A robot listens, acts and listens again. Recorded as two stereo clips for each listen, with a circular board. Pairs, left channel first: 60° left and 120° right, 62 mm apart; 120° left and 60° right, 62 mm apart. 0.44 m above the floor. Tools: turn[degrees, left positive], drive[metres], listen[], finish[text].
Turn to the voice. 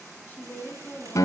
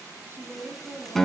Action: finish[Found it: a woman speaking, straight ahead.]